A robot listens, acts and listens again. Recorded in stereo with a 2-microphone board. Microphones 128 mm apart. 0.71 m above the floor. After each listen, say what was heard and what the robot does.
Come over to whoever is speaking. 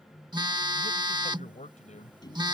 The man speaking: about 60° left or 120° left. Turn 60° left.
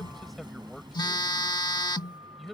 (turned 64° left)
Drive 1.0 m forward.
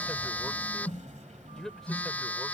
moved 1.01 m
Drive 1.0 m forward.
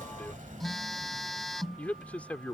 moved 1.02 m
The man speaking is now 10° left. Turn 10° left.
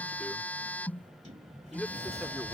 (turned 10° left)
Drive 1.0 m forward.
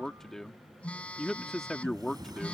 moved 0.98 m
Drive 1.0 m forward.
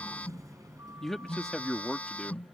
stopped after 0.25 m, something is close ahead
I am next to the man speaking.